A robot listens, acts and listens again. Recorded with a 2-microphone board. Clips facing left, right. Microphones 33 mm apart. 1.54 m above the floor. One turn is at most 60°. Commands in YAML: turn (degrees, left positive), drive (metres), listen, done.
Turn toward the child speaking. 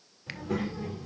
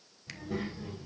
turn: 60
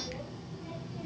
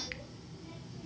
turn: 45
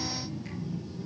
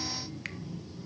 done: "Facing the child speaking, over 4 m away."